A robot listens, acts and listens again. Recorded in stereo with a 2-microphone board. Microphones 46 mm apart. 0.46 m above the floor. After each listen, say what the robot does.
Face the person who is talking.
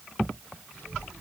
Turn 55° right.
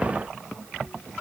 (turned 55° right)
Turn 70° right.
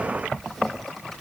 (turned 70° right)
Found it: a child speaking, straight ahead, over 4 m away.